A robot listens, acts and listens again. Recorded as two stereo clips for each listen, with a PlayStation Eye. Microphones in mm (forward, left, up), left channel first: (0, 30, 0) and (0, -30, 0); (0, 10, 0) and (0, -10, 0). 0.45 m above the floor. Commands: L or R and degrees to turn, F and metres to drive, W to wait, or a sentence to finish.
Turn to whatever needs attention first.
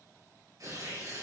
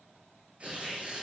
W
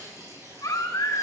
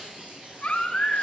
L90
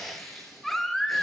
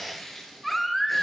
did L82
Found it: a baby crying, straight ahead.